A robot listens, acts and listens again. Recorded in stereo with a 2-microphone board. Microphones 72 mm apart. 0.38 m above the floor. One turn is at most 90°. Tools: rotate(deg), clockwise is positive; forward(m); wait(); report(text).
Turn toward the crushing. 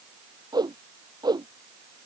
wait()
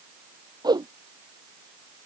wait()
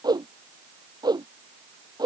report("I can't make out crushing, only a whoosh.")